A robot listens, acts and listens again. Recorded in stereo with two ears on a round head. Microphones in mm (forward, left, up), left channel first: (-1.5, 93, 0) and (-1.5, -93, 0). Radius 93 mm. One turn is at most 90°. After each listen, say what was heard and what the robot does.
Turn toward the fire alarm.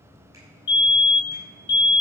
The fire alarm: about 55° left or 125° left. Turn 55° left.
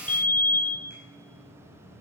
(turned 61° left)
So it is at 10° left. Turn 10° left.
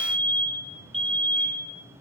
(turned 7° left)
Facing the fire alarm, 1 to 2 m away.